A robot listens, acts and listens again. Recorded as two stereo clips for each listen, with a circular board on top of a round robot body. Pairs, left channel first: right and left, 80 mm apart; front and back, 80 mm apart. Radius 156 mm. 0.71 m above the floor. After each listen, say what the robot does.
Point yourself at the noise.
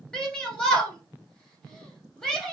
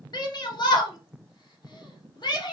Turn 10° right.
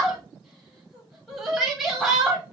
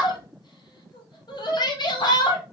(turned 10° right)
Facing the shout, 1 to 2 m away.